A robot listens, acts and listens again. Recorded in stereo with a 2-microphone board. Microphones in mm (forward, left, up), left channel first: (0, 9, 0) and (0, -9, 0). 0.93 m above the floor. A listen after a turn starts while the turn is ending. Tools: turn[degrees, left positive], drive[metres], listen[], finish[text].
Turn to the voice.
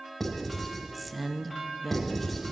Action: turn[-30]
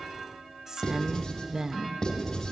Thought: So it is at 140° right.
Action: turn[-140]
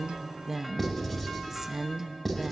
Thought: The woman speaking is now 15° right.
Action: turn[-15]
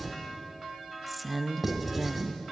Action: finish[Facing the woman speaking.]